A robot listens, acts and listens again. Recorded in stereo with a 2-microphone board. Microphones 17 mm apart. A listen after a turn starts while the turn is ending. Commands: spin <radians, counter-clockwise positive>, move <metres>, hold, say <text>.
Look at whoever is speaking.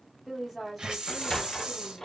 spin 0.52
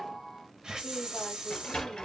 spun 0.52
hold
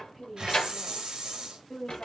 spin 2.62
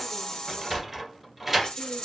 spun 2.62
hold
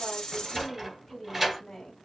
spin 0.26
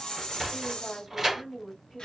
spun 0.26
say Facing the woman speaking, 1 to 2 m away.